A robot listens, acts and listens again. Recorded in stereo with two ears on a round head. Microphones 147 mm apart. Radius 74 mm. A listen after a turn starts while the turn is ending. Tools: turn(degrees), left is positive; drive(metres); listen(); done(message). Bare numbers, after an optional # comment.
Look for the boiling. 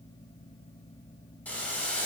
turn(30)
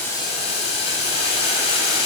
# So it is at 140° left.
turn(140)
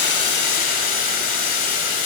# The boiling is now 55° left.
turn(55)
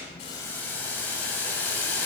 # The boiling is now 10° left.
turn(10)
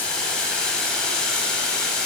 done("Found it: boiling, straight ahead.")